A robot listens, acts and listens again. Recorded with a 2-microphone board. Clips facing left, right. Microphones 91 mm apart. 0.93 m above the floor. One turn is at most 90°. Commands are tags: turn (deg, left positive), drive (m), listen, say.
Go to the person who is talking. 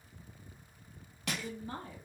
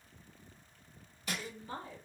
<turn deg="40"/>
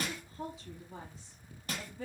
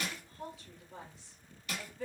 <turn deg="90"/>
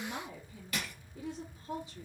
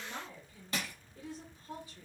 <turn deg="25"/>
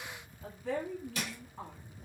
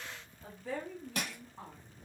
<drive m="1.0"/>
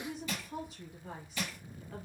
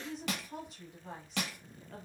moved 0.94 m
<drive m="1.0"/>
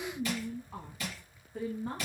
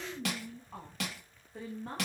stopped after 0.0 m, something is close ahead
<say>Arrived at the woman speaking, straight ahead.</say>